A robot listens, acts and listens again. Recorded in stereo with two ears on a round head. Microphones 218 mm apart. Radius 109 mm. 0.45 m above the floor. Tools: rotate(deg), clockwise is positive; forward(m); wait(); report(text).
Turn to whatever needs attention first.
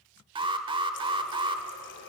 rotate(20)
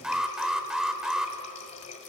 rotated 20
report("Facing the alarm, 1 to 2 m away.")